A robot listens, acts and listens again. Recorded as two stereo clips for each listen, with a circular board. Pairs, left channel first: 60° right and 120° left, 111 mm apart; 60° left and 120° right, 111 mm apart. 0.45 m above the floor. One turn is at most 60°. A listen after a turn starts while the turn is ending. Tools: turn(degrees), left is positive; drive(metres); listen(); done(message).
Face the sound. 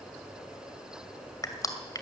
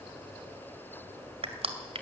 turn(degrees=-60)
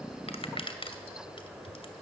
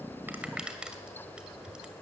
turn(degrees=-40)
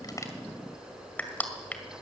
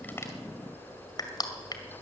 turn(degrees=15)
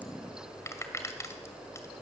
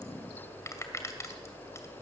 done("Facing the crushing.")